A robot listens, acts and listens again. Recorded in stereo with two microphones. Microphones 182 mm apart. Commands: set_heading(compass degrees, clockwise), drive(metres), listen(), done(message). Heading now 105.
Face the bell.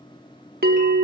set_heading(165)
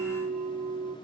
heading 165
set_heading(200)
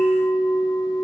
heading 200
set_heading(185)
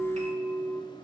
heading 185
done("Found it: a bell, straight ahead, under 1 m away.")